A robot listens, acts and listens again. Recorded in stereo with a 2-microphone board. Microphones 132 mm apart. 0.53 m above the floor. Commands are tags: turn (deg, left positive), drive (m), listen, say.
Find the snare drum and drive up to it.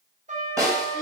<turn deg="-20"/>
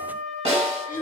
<turn deg="-135"/>
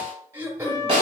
<turn deg="-45"/>
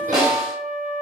<drive m="1.0"/>
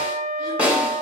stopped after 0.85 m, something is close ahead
<turn deg="-10"/>
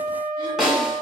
<say>Arrived at the snare drum, straight ahead.</say>